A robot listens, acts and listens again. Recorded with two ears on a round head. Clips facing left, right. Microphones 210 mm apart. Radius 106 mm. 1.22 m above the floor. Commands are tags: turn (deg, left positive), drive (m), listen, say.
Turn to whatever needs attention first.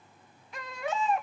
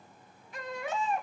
<turn deg="65"/>
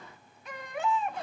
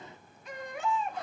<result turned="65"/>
<turn deg="50"/>
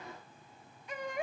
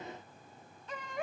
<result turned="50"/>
<turn deg="10"/>
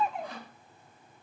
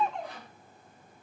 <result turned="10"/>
<say>Facing the baby crying, 1 to 2 m away.</say>